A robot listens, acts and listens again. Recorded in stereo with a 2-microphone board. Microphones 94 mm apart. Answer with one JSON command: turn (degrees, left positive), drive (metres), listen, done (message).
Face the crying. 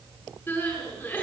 {"turn": 25}
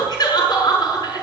{"turn": 130}
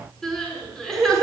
{"done": "Found it: crying, straight ahead."}